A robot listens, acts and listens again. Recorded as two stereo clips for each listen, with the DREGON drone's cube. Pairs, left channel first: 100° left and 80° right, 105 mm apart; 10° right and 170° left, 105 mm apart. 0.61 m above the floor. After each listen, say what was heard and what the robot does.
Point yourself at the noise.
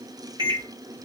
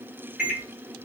The microwave: 110° right. Turn 110° right.
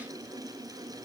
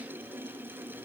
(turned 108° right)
Keep listening.
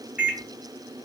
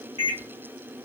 Facing the microwave, 1 to 2 m away.